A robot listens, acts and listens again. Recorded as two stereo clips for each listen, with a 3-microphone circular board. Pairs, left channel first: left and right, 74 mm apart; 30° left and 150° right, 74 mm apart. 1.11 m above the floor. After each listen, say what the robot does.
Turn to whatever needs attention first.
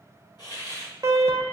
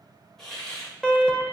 Turn 55° right.
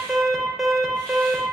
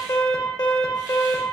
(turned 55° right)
Facing the alarm, under 1 m away.